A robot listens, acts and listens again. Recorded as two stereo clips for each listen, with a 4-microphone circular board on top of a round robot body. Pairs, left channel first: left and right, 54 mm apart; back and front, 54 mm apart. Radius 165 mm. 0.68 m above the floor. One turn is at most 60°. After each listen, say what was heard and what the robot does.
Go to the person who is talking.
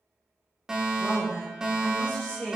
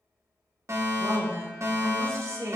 The woman speaking: 25° left. Turn 25° left.
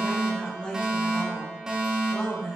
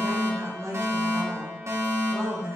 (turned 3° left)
The woman speaking is now 20° left. Turn 20° left.
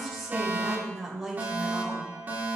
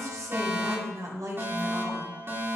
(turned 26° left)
Drive 1.0 m forward.
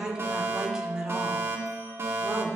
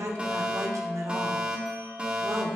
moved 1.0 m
The woman speaking is now 10° right. Turn 10° right.
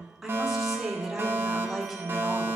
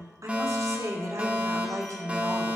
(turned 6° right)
Drive 1.0 m forward.
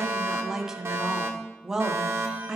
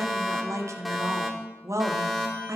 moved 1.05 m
The woman speaking is now 10° right. Turn 10° right.
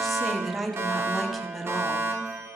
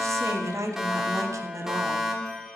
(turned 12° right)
Drive 1.0 m forward.
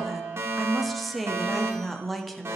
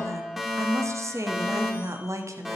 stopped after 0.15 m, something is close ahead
I am next to the woman speaking.